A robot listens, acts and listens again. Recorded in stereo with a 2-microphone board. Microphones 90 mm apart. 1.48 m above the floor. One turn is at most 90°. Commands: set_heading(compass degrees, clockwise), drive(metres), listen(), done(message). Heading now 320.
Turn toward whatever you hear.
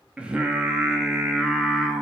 set_heading(350)
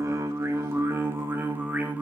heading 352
set_heading(82)
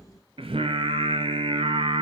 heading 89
set_heading(179)
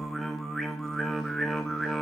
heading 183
done("Facing the singing.")